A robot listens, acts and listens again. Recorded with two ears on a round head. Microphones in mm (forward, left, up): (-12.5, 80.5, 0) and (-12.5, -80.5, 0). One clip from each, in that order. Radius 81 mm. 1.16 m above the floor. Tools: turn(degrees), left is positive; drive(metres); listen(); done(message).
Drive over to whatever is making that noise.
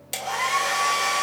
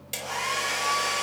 turn(degrees=20)
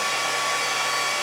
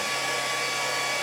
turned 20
turn(degrees=140)
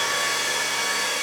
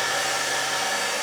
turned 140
turn(degrees=15)
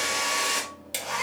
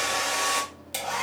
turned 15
drive(metres=1.0)
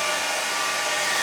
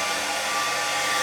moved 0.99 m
drive(metres=1.0)
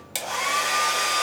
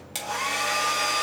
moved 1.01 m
turn(degrees=15)
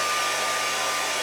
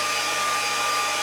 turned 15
drive(metres=1.0)
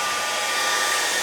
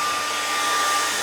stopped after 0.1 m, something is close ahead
done("Arrived at the hair dryer, straight ahead.")